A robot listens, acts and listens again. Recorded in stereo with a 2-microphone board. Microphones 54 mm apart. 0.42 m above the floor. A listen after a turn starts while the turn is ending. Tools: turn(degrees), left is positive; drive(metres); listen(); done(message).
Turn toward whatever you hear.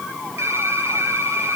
turn(degrees=-65)
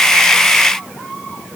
listen()
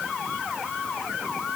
listen()
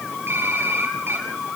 turn(degrees=-50)
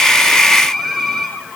done("Found it: typing on a keyboard, straight ahead, over 4 m away.")